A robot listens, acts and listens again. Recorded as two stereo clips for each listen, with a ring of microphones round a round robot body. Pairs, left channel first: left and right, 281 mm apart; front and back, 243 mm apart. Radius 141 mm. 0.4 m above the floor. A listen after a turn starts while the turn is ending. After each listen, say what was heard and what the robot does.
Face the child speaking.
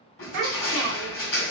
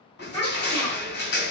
The child speaking: 75° right. Turn 75° right.
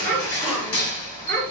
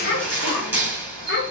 The child speaking is now 10° left. Turn 10° left.
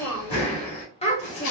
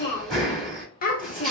The child speaking is now 40° left. Turn 40° left.
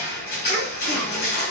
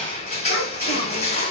Keep listening.
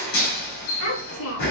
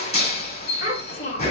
The child speaking is now 55° left. Turn 55° left.
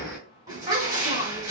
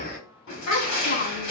The child speaking is now 20° right. Turn 20° right.
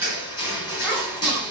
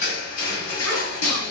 Keep listening.
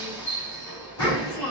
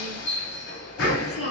The child speaking is now 10° left. Turn 10° left.
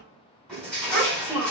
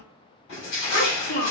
Found it: a child speaking, straight ahead, 1 to 2 m away.